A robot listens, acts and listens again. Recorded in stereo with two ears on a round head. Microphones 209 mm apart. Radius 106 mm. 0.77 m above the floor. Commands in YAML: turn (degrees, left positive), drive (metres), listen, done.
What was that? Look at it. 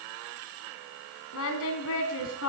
turn: 60
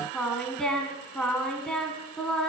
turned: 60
done: "Facing the singing."